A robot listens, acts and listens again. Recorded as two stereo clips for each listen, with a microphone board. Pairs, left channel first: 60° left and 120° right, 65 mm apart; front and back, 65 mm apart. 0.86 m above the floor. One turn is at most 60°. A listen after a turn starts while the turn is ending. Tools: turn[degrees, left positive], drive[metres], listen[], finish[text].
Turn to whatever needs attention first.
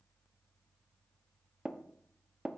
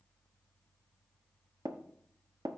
Action: listen[]
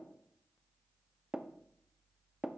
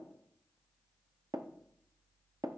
Action: listen[]
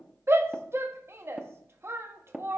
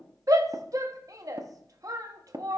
Thought: The shout: 165° right.
Action: turn[-60]
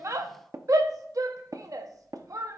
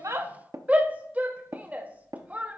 Thought: The shout is now 115° right.
Action: turn[-60]
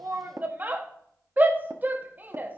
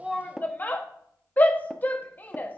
Thought: The shout is now 65° right.
Action: turn[-60]
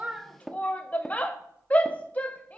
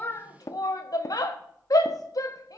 Action: finish[Found it: a shout, straight ahead.]